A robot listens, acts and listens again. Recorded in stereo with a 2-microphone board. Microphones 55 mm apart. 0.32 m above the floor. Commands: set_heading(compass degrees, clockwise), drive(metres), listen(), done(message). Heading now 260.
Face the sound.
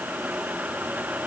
listen()
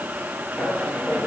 set_heading(245)
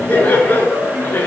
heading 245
set_heading(210)
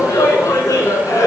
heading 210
set_heading(100)
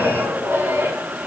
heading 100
set_heading(140)
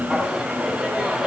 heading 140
set_heading(150)
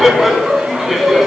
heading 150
done("Found it: laughter, straight ahead.")